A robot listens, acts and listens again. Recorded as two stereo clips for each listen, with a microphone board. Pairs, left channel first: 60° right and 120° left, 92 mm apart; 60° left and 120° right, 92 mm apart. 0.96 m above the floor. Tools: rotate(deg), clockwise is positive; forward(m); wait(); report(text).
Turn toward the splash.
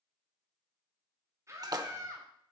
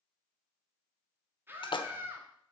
rotate(-80)
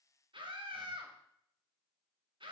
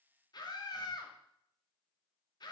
report("Facing where the splash came from. I can't hear it now.")